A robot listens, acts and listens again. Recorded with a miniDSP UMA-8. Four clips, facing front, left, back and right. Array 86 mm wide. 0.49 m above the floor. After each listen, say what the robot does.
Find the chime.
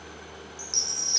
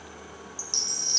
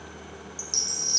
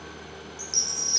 Turn 115° left.
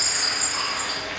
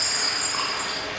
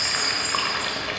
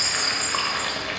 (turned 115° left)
Found it: a chime, straight ahead.